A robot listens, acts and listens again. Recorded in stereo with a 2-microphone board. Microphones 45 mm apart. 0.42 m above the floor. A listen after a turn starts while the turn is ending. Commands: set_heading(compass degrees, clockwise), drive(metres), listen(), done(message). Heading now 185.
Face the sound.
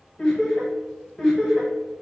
set_heading(155)
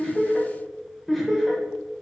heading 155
set_heading(185)
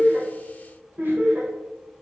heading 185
set_heading(315)
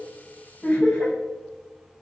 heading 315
set_heading(275)
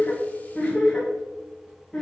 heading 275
set_heading(265)
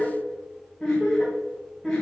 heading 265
done("Facing the laughter, 1 to 2 m away.")